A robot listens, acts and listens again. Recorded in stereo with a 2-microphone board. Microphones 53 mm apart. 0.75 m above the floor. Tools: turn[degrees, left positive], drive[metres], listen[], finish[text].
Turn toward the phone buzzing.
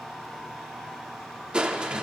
Action: listen[]
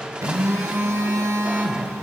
Thought: The phone buzzing: about 70° right or 110° right.
Action: turn[-70]
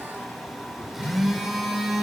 Action: finish[Facing the phone buzzing.]